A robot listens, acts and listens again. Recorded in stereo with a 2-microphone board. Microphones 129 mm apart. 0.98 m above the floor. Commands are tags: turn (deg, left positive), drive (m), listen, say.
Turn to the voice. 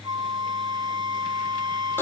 <listen/>
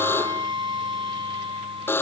<listen/>
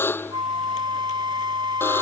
<say>I can't make out anyone speaking to turn to.</say>